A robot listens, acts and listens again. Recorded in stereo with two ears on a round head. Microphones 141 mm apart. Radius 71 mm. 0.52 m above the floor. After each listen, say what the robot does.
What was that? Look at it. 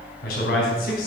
Turn 65° left.
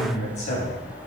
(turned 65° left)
Turn 45° left.
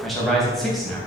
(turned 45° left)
Found it: a man speaking, straight ahead, 2 to 4 m away.